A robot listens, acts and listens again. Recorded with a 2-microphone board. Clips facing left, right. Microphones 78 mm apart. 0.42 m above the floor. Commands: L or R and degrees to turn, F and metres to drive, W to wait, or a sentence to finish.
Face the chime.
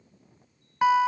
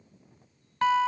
W
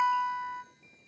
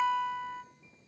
W
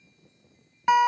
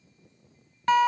I can't make out a chime, only a guitar.